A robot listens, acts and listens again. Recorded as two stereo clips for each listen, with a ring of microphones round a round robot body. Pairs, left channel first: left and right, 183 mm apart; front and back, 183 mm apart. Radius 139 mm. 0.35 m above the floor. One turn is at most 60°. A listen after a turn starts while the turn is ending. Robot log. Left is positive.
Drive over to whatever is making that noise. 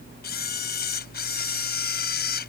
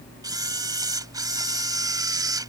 note: The camera shutter: 110° left.
cmd yaw +60
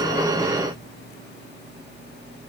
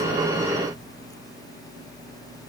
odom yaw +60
note: Nothing new. It was at 50° left.
cmd yaw +50
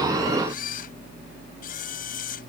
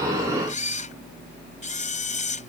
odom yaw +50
note: The camera shutter is now 45° left.
cmd yaw +45
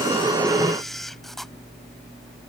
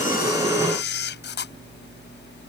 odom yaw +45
cmd fwd 1.0
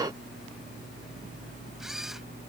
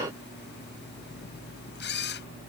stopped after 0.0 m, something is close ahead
end: Blocked. The camera shutter is further on, straight ahead.